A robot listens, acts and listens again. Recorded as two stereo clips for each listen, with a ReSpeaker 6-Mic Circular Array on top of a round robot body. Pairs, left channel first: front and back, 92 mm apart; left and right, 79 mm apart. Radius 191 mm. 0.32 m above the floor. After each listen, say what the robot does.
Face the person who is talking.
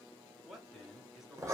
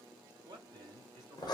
Turn 95° right.
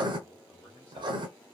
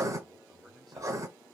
Keep listening.
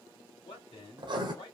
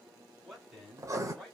Found it: a man speaking, straight ahead, 1 to 2 m away.